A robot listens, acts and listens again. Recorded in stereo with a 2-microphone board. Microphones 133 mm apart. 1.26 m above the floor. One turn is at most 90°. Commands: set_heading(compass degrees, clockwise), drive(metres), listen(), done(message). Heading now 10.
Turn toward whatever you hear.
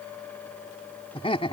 set_heading(330)
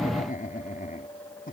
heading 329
set_heading(239)
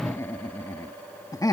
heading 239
set_heading(214)
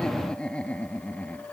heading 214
set_heading(204)
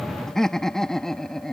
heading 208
done("Facing the laughter.")